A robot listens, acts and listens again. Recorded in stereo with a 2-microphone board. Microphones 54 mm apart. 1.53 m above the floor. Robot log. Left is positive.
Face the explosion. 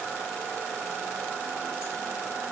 cmd idle
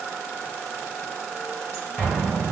note: The explosion: about 40° left or 140° left.
cmd yaw +40
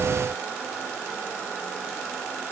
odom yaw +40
cmd idle
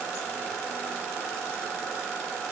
end: I heard an explosion, but can't make it out now. It was about straight ahead or 100° left.